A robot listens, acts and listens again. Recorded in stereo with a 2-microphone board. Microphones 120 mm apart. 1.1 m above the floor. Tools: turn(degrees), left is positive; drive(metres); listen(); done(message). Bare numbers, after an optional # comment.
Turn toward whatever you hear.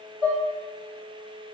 # The dishes clattering: about 40° right or 140° right.
turn(-40)
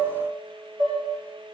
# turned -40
# So it is at 100° right.
turn(-100)
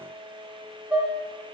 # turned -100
# The dishes clattering is now 15° right.
turn(-15)
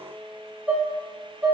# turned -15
# The dishes clattering is now 10° right.
turn(-10)
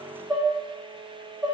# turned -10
done("Found it: dishes clattering, straight ahead.")